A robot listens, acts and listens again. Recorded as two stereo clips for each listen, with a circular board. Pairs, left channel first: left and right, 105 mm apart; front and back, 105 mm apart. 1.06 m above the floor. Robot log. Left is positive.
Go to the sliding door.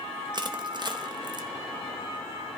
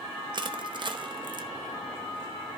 cmd idle
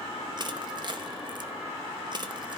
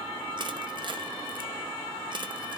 cmd idle
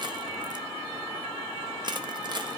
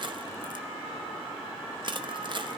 end: I can't make out a sliding door to turn to.